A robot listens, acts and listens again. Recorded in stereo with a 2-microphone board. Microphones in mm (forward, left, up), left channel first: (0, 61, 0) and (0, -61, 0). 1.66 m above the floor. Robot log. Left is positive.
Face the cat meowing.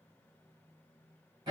cmd idle
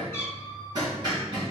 note: The cat meowing: about 20° left or 160° left.
cmd yaw +20
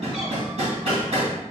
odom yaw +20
cmd idle
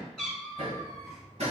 end: Found it: a cat meowing, straight ahead.